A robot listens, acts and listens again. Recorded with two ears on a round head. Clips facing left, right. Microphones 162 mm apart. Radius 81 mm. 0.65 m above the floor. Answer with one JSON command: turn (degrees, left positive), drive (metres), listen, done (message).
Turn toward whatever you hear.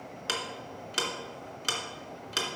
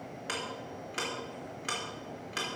{"turn": 50}
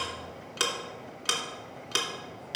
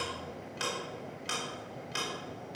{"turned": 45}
{"turn": 85}
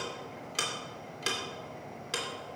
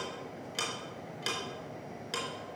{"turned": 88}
{"done": "Found it: ticking, straight ahead, 2 to 4 m away."}